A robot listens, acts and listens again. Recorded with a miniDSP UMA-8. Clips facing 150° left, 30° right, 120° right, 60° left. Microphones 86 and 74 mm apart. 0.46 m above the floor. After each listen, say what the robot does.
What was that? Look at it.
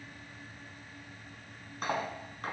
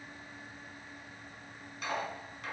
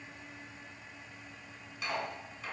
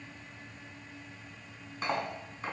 Turn 105° left.
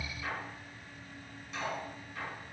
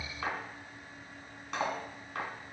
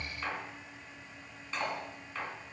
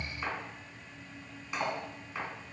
Turn 15° right.
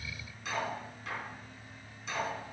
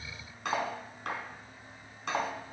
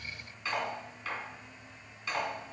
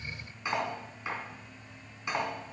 Turn 10° right.
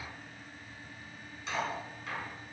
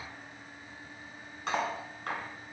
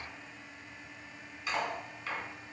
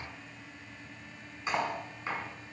Facing the cutlery clinking, 2 to 4 m away.